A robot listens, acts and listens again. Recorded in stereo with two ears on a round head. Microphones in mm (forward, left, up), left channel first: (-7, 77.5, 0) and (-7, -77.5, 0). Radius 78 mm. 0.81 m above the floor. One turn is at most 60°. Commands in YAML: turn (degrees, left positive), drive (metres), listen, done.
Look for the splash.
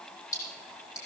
turn: 20
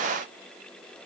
listen: true
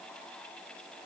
done: "I heard a splash, but can't make it out now. It was about straight ahead or 140° left."